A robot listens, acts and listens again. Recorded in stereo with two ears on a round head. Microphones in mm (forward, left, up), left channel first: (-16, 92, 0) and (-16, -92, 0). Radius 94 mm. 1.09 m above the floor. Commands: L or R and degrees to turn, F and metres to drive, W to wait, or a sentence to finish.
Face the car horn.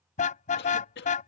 L40
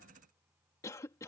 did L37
W
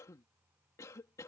W
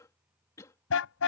L100
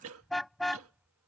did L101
Found it: a car horn, straight ahead.